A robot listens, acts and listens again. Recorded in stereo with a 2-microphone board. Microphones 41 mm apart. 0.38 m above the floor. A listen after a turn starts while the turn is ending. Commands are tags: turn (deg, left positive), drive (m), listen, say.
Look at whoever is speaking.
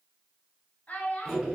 <turn deg="35"/>
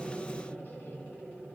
<listen/>
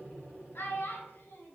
<turn deg="105"/>
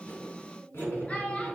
<turn deg="35"/>
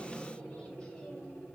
<listen/>
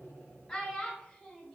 <turn deg="20"/>
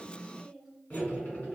<say>Facing the child speaking.</say>